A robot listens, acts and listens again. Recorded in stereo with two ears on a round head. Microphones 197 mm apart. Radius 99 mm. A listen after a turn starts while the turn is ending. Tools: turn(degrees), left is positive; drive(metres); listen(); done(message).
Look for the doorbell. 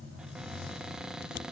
listen()
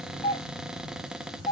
turn(degrees=25)
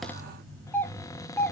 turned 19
turn(degrees=10)
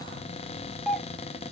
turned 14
done("Found it: a doorbell, straight ahead.")